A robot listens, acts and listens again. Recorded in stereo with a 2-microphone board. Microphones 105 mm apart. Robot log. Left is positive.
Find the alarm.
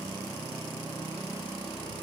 cmd idle
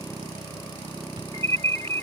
note: The alarm: about 75° right or 105° right.
cmd yaw -75
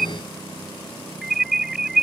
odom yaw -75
end: Facing the alarm.